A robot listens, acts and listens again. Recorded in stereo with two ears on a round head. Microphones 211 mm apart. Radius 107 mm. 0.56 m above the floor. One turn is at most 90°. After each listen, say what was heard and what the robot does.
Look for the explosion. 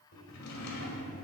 Keep listening.
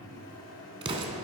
The explosion: about 25° right or 155° right. Turn 25° right.
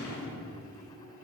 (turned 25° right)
Keep listening.
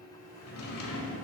I heard an explosion, but can't make it out now. It was about straight ahead or 130° right.